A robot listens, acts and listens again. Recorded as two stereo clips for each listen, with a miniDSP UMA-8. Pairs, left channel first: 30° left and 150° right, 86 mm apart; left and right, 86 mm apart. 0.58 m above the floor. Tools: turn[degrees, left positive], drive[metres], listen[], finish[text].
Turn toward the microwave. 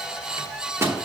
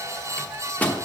Thought: The microwave: 160° left.
Action: turn[160]
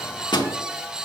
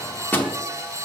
Thought: The microwave is now 25° left.
Action: turn[25]
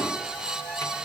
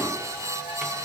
Action: listen[]
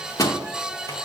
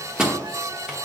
Thought: The microwave is now 10° right.
Action: turn[-10]
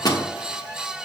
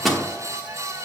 Action: finish[Found it: a microwave, straight ahead.]